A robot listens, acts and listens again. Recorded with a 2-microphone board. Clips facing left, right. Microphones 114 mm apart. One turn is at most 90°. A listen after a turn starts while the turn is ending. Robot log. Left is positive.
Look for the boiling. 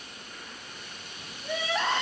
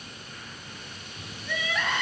cmd idle
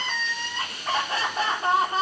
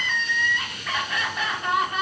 cmd idle
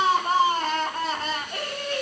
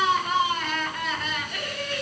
end: I can't make out boiling, only crying.